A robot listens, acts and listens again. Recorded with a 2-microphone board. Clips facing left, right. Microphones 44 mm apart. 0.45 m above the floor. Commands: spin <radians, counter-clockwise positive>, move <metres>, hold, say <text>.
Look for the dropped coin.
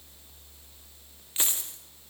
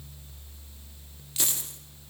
spin 0.52
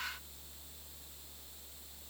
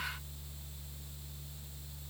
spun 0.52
hold
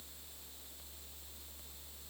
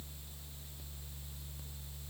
say I heard a dropped coin, but can't make it out now. It was about straight ahead or 120° left.